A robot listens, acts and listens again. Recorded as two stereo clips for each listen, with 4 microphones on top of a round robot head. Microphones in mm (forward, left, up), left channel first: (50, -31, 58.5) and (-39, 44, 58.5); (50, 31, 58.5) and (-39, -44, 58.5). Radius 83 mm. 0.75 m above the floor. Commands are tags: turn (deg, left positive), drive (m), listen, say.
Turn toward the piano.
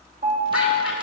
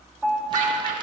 <turn deg="135"/>
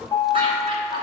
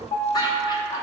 <turn deg="15"/>
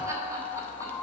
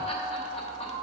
<say>Found it: a piano, straight ahead, 1 to 2 m away.</say>